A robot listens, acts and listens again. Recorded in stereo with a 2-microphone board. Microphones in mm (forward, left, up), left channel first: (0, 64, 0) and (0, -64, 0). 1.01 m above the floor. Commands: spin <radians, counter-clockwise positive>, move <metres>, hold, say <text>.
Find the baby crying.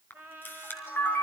hold
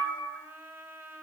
hold
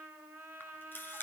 say I can't make out a baby crying to turn to.